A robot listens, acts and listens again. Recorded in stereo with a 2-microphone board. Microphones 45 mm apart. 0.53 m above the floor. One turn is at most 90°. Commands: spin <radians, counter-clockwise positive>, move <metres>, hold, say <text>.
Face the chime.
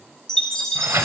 spin 0.52
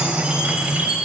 spin -0.35
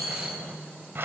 say Found it: a chime, straight ahead.